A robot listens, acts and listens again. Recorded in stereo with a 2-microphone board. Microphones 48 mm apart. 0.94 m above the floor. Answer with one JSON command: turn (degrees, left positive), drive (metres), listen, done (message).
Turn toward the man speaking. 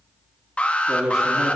{"turn": -30}
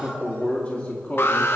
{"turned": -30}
{"turn": 40}
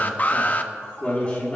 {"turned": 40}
{"turn": 35}
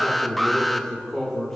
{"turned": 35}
{"turn": 15}
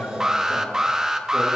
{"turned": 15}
{"done": "Facing the man speaking, 2 to 4 m away."}